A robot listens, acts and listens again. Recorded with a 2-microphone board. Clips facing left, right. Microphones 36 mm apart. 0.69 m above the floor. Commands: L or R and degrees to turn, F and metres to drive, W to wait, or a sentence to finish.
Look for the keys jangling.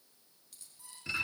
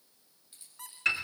R20
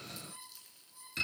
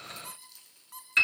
Facing the keys jangling.